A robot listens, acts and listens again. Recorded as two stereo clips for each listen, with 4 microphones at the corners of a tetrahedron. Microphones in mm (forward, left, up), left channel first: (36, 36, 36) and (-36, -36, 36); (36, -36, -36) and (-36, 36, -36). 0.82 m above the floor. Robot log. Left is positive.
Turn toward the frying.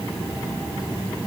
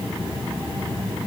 cmd idle
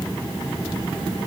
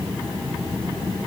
cmd idle
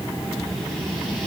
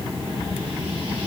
end: I can't make out frying to turn to.